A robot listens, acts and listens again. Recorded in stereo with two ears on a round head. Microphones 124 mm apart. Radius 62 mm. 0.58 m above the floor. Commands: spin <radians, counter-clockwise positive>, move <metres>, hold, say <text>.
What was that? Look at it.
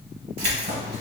spin -1.13
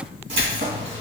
spin -0.70
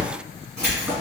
say Facing the keys jangling, 2 to 4 m away.